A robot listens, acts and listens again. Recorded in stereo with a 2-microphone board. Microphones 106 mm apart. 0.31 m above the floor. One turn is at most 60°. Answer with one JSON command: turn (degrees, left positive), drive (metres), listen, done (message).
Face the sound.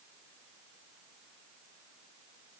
{"listen": true}
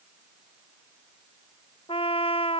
{"turn": 60}
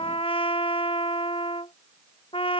{"turn": 55}
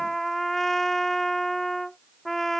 {"done": "Found it: a trumpet, straight ahead."}